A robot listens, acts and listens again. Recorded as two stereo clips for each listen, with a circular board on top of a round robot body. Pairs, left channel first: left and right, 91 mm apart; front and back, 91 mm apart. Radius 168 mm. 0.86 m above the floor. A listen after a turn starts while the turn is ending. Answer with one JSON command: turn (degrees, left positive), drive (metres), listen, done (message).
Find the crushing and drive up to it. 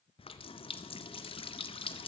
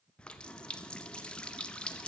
{"listen": true}
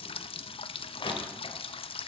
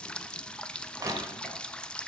{"turn": 125}
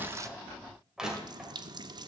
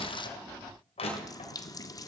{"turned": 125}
{"drive": 1.0}
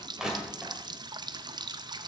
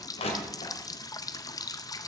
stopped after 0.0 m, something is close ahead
{"done": "Blocked. The crushing is further on, straight ahead."}